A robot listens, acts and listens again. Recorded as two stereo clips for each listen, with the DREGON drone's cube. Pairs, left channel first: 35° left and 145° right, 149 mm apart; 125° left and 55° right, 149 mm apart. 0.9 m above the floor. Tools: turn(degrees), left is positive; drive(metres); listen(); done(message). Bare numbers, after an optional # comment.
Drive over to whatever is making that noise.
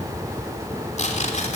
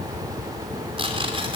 drive(1.0)
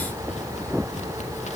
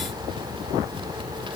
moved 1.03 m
listen()
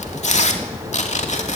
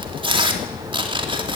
drive(1.0)
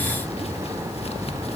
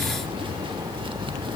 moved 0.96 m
listen()
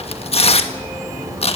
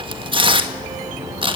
drive(1.0)
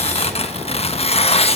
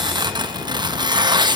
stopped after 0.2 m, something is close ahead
done("I am next to the tearing paper.")